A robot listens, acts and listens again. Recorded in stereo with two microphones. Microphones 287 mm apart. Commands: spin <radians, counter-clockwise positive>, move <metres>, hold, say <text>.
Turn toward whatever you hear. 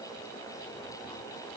hold
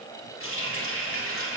spin 0.87
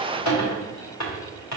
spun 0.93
spin 1.40
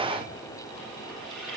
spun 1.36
say Found it: a running tap, straight ahead.